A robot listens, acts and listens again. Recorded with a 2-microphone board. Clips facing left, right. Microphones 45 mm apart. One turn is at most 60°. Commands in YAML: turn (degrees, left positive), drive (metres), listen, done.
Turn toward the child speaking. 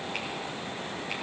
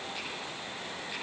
listen: true
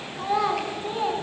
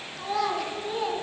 turn: 15
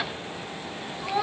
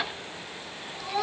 turn: 30
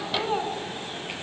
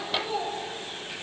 turn: 60
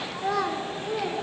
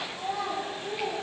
turn: 60
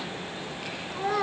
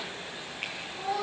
turn: 55
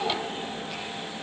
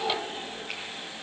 done: "Found it: a child speaking, straight ahead, 2 to 4 m away."